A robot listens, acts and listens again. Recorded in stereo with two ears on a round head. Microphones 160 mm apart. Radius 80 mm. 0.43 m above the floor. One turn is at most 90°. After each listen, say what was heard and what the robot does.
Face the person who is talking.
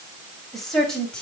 Turn 30° left.
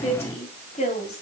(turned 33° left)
So it is at 140° left. Turn 90° left.
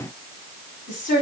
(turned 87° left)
The woman speaking is now 45° left. Turn 45° left.
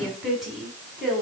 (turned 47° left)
Facing the woman speaking, over 4 m away.